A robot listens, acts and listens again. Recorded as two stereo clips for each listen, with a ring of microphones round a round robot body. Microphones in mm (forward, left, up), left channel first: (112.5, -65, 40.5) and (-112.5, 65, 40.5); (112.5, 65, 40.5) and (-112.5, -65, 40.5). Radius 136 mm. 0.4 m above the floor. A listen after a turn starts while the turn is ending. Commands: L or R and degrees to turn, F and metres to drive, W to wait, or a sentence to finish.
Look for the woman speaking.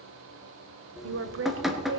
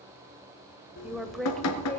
L110
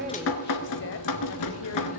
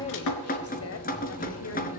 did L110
W
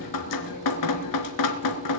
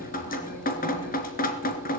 W
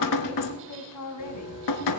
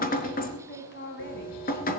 R20
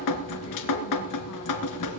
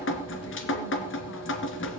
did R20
W
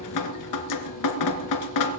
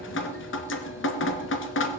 W
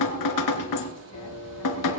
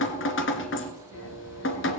I heard a woman speaking from this way, but can't make it out now.